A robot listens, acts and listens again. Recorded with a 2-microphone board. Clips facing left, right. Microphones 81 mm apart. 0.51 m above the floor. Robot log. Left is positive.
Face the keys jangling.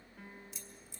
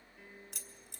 note: The keys jangling: about 60° right or 120° right.
cmd yaw -60
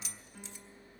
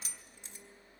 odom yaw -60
note: So it is at 45° right.
cmd yaw -45
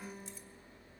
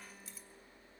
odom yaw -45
cmd idle
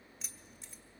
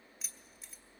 end: Facing the keys jangling, 1 to 2 m away.